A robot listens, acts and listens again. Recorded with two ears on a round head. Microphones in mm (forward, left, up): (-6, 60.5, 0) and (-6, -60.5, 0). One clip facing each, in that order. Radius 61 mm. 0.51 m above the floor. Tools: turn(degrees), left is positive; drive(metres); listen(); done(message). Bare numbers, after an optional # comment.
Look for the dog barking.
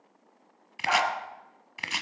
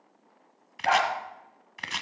# The dog barking: about 60° right or 120° right.
turn(-60)
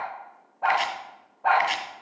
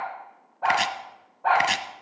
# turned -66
done("Facing the dog barking.")